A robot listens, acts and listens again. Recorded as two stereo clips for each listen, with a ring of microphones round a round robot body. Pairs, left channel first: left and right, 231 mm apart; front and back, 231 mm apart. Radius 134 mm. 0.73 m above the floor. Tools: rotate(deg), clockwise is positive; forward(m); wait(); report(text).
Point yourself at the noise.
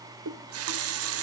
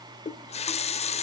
rotate(65)
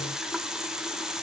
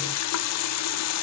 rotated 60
report("Found it: a running tap, straight ahead.")